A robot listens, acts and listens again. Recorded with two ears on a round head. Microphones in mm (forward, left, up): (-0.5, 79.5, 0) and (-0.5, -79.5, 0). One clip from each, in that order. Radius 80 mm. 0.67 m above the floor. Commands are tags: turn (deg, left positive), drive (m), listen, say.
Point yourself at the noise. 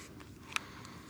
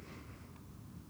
<listen/>
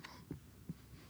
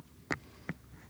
<listen/>
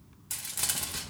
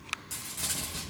<turn deg="35"/>
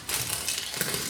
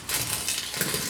<say>Found it: crumpling, straight ahead, 1 to 2 m away.</say>